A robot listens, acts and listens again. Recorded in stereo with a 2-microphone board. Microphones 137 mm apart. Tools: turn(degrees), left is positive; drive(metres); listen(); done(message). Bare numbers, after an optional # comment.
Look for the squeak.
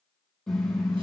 listen()
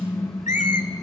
# The squeak: about 65° left or 115° left.
turn(65)
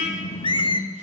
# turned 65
# So it is at 40° left.
turn(40)
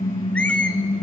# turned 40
# The squeak is now 10° left.
turn(10)
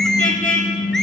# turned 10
listen()
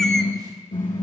listen()
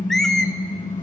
done("Facing the squeak.")